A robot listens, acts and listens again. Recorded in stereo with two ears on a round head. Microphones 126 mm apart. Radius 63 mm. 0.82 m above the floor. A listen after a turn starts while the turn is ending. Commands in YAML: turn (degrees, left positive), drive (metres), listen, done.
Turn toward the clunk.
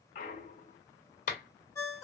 turn: 55
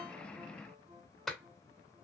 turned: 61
listen: true
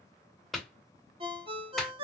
done: "I heard a clunk, but can't make it out now. It was about 5° right or 65° left."